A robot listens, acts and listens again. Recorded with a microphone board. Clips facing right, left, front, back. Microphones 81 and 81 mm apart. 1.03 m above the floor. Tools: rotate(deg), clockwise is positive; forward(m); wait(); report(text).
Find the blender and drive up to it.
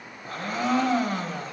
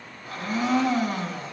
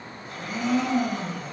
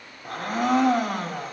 rotate(140)
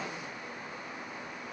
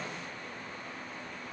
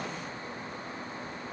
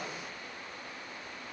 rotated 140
wait()
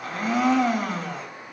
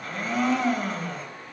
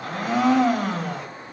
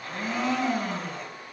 forward(1.0)
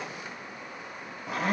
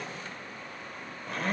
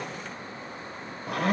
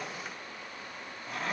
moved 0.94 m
forward(1.0)
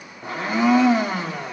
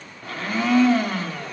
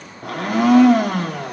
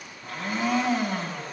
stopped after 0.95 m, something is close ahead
rotate(15)
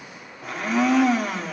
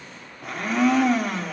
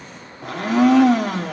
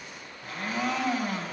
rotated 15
report("I am next to the blender.")